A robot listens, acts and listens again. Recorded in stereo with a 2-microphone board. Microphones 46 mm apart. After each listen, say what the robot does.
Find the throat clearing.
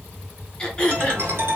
Turn 20° left.
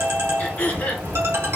Turn 135° left.
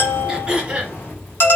Turn 20° right.
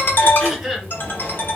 Facing the throat clearing.